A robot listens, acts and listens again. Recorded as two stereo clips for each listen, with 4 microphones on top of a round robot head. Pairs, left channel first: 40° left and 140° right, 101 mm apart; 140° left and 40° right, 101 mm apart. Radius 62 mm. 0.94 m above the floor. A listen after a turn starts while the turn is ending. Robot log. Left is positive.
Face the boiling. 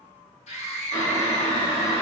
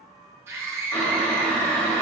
note: The boiling: 70° left.
cmd yaw +70
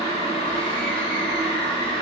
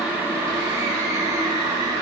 note: The boiling is now 10° left.
cmd yaw +10
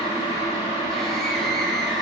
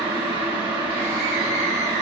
end: Found it: boiling, straight ahead.